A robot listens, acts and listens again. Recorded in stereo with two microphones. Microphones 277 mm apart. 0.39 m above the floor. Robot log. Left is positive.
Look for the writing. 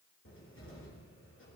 cmd idle
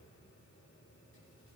cmd idle
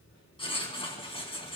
note: The writing: about 20° left or 160° left.
cmd yaw +20
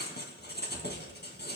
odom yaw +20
note: So it is at 140° left.
cmd yaw +140
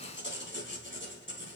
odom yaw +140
note: The writing is now 45° left.
cmd yaw +45
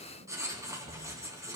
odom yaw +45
note: The writing is now 10° right.
cmd yaw -10
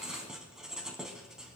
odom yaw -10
end: Found it: writing, straight ahead, 2 to 4 m away.